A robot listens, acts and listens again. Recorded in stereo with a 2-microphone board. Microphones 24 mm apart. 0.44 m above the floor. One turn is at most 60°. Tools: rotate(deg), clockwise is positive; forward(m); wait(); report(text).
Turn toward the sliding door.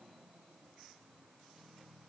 wait()
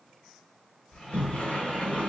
rotate(-55)
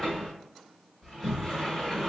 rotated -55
report("Found it: a sliding door, straight ahead, 1 to 2 m away.")